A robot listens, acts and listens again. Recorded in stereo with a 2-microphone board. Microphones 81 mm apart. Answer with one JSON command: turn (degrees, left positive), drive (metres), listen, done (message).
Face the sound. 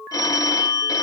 {"turn": 50}
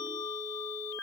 {"listen": true}
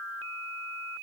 {"listen": true}
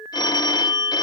{"turn": 70}
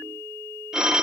{"turn": -10}
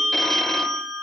{"done": "Found it: a phone ringing, straight ahead."}